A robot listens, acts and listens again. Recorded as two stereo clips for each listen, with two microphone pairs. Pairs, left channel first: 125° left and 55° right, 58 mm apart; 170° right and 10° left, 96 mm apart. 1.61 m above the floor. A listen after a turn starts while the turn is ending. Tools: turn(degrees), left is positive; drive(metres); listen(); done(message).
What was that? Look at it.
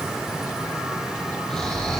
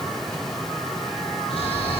turn(degrees=-155)
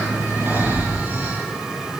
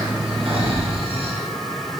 done("Facing the snoring.")